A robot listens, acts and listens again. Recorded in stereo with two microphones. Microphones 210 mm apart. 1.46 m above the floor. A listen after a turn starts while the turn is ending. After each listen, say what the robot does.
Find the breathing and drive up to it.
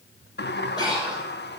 Turn 20° left.
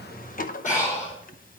Turn 145° left.
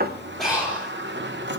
Drive 1.0 m forward.
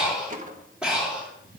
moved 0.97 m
Drive 1.0 m forward.
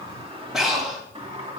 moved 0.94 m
Drive 1.0 m forward.
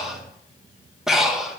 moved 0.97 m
Drive 1.0 m forward.
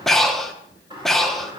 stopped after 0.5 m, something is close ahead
Arrived at the breathing, straight ahead.